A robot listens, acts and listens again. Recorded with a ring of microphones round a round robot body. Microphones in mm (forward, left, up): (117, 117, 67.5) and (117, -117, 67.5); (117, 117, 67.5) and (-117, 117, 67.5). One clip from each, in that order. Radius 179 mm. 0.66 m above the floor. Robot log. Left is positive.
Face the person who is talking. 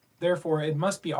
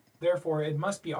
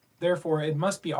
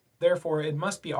note: The man speaking: 110° left.
cmd yaw +110
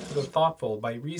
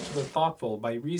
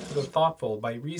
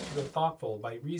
end: Found it: a man speaking, straight ahead, 1 to 2 m away.